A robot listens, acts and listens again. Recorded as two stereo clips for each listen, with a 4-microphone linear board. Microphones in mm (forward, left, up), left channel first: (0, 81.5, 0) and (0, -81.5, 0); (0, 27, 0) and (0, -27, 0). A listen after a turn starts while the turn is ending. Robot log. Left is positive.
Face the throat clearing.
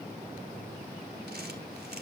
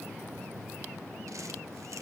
cmd idle
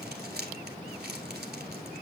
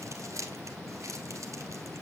cmd idle
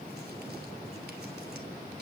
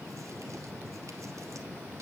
end: I can't make out throat clearing, only crumpling.